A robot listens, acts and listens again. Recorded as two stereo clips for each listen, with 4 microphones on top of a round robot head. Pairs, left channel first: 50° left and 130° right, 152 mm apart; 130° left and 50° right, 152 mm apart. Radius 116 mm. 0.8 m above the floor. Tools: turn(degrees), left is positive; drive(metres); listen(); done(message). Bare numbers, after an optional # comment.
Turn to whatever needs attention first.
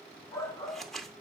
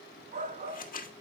# The shout: 20° right.
turn(-20)
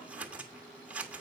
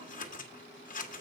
listen()
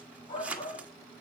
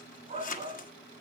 done("Found it: a shout, straight ahead.")